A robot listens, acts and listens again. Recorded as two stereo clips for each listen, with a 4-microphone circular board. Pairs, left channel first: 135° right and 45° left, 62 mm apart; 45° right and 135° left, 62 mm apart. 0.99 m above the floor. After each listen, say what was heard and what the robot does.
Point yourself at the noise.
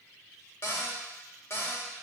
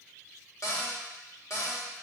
The cupboard door: 85° right. Turn 85° right.
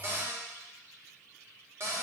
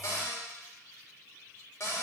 Facing the cupboard door, 1 to 2 m away.